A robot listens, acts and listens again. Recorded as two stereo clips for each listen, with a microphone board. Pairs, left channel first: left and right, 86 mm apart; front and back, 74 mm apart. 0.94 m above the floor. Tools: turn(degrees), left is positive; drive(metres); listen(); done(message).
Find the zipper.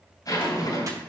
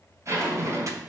turn(degrees=140)
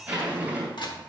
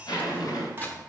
turn(degrees=-20)
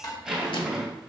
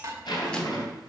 done("Found it: a zipper, straight ahead.")